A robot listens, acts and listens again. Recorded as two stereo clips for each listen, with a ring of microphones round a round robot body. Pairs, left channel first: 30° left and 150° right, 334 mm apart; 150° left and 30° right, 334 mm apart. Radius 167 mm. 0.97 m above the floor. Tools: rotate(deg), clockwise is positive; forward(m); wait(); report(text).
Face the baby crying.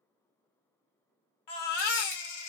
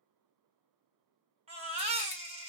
rotate(-45)
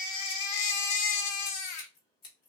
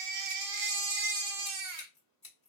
report("Facing the baby crying.")